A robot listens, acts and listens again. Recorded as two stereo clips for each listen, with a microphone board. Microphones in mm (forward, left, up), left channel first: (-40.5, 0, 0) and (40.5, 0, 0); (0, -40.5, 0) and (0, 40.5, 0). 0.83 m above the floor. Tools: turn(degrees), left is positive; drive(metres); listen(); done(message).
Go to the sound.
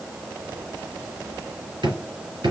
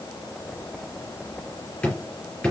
turn(degrees=-15)
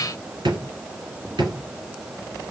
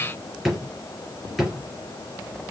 drive(metres=1.0)
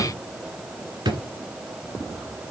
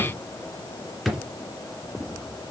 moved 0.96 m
drive(metres=1.0)
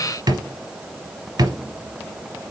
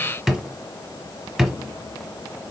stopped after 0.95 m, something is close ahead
done("Arrived at the drawer, straight ahead.")